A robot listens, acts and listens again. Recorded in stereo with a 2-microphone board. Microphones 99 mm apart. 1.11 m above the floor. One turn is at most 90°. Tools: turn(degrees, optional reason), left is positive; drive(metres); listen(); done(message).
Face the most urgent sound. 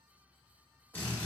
listen()
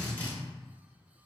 listen()
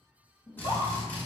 turn(degrees=50, reason="The scream: about 50° left or 130° left.")
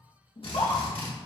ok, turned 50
turn(degrees=75, reason="So it is at 75° left.")
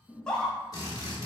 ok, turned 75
turn(degrees=10, reason="The scream is now 10° left.")
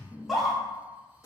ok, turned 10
done("Found it: a scream, straight ahead, 1 to 2 m away.")